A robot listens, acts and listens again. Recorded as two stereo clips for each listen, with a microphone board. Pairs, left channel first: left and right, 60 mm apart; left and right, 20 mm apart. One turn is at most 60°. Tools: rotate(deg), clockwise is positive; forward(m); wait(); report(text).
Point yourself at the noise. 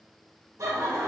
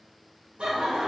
rotate(60)
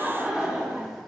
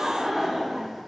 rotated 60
report("Found it: laughter, straight ahead, 1 to 2 m away.")